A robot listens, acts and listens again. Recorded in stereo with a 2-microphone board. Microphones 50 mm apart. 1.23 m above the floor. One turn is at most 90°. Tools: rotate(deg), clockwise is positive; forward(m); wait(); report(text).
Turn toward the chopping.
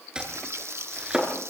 rotate(20)
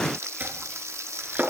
rotate(90)
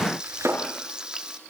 rotate(75)
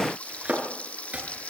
rotate(30)
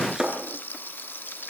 rotate(10)
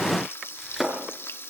report("Found it: chopping, straight ahead.")